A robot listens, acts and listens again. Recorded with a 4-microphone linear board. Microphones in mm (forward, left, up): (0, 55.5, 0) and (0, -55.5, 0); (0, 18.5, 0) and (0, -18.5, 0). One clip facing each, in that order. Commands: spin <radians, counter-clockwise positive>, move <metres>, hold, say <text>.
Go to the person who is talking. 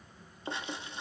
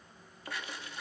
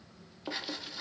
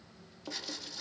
hold
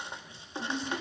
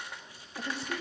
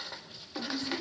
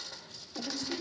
spin -1.57
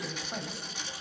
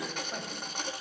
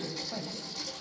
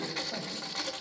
move 1.0
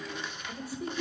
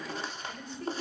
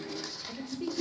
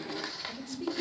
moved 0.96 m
spin 0.17
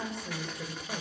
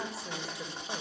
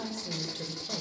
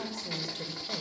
move 1.0
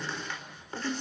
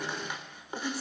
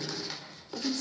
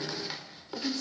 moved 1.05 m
spin -0.17
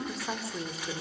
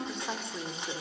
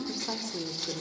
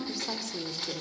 move 1.0
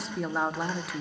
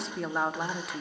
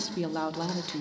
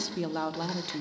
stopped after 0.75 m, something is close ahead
say I am next to the woman speaking.